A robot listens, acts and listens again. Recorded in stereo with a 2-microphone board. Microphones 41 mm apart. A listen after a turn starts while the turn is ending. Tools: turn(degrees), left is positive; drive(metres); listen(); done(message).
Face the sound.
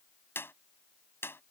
turn(degrees=65)
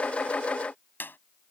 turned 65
turn(degrees=50)
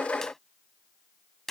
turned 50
done("Facing the clap.")